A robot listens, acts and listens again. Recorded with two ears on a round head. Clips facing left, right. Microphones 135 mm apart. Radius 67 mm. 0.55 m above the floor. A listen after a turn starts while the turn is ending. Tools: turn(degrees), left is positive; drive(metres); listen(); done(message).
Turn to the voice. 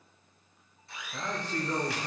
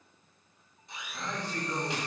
turn(degrees=65)
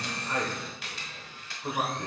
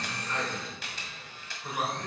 turn(degrees=20)
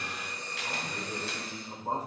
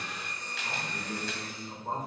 turn(degrees=10)
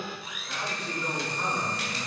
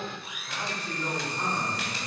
done("Found it: a man speaking, straight ahead.")